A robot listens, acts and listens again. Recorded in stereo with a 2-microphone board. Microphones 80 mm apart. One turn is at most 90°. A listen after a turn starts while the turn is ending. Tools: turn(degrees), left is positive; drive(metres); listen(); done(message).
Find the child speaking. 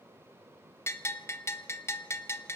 listen()
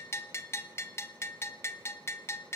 listen()
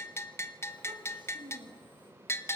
turn(degrees=-90)
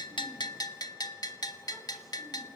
listen()
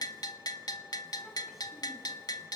listen()
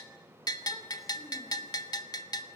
done("I heard a child speaking from this way, but can't make it out now.")